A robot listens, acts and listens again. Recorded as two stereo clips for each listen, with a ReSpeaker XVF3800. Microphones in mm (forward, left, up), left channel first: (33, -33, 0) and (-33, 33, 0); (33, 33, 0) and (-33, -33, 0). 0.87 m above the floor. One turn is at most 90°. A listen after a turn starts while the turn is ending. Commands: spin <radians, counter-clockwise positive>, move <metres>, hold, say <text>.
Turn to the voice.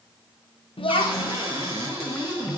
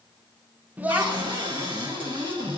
spin -1.05
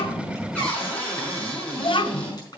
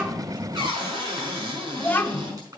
spin -0.44
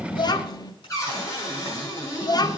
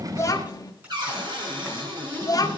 say Found it: a child speaking, straight ahead.